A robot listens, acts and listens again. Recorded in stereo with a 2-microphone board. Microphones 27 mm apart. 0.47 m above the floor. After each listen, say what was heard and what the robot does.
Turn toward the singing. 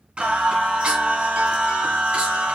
The singing: about 65° right or 115° right. Turn 65° right.
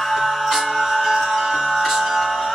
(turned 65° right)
So it is at 15° right. Turn 15° right.
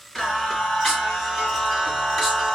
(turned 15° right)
Found it: singing, straight ahead, 2 to 4 m away.